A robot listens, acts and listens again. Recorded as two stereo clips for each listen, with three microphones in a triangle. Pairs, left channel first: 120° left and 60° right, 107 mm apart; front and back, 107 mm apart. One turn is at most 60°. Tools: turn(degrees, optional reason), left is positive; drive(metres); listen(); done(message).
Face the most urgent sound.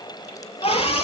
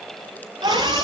turn(degrees=60, reason="The scream: 130° left.")
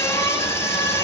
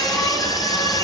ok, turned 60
turn(degrees=55, reason="The scream is now 55° left.")
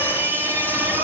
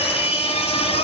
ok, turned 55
turn(degrees=10, reason="The scream is now 10° left.")
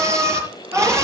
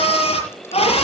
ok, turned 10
done("Found it: a scream, straight ahead, over 4 m away.")